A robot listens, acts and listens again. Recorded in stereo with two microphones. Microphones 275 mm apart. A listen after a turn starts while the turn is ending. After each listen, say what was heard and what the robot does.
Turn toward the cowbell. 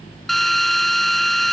Keep listening.
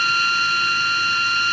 Keep listening.
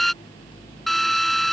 I can't make out a cowbell to turn to.